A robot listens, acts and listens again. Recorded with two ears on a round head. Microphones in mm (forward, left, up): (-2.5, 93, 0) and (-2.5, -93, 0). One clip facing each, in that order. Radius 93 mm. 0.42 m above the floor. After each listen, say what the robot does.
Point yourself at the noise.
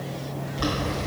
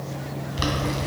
Turn 50° right.
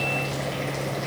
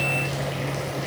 Keep listening.
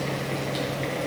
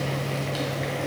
Keep listening.
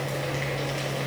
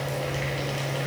I heard boiling, but can't make it out now. It was about straight ahead or 80° right.